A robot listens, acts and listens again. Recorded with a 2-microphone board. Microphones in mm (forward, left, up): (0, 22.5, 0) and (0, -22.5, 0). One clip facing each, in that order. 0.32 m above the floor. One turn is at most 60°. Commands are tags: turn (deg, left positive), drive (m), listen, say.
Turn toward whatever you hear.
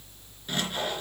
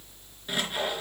<turn deg="-30"/>
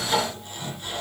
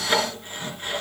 <turn deg="-60"/>
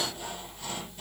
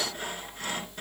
<turn deg="-60"/>
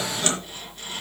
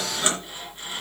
<turn deg="-25"/>
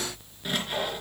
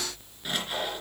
<say>Facing the sawing, 2 to 4 m away.</say>